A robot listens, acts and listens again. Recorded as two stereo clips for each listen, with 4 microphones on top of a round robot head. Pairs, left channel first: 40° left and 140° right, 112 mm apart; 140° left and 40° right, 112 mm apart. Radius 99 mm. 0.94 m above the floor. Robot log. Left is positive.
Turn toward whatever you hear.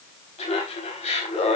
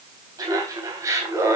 note: The laughter: 25° left.
cmd yaw +25
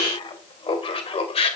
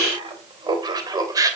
note: The laughter is now 15° left.
cmd yaw +15
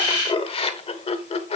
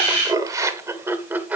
note: The laughter is now 40° left.
cmd yaw +40
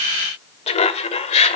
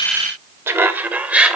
note: The laughter is now 40° left.
cmd yaw +40
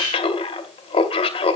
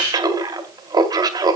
note: The laughter is now 10° left.
cmd yaw +10
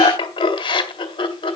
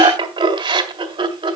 end: Found it: laughter, straight ahead, 2 to 4 m away.